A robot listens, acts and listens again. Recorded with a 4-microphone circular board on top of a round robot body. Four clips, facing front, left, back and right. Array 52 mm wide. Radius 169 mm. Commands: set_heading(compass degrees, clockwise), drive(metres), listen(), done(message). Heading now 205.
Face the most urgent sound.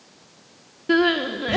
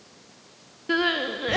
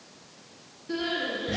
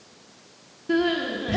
set_heading(160)
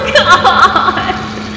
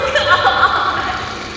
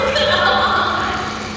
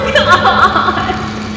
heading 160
done("Facing the crying.")